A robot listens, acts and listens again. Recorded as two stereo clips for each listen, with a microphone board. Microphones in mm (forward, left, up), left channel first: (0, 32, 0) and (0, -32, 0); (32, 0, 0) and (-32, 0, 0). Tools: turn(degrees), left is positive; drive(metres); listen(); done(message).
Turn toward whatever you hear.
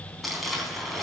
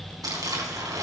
turn(degrees=180)
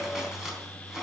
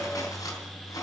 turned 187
listen()
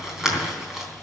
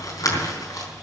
done("Found it: crumpling, straight ahead.")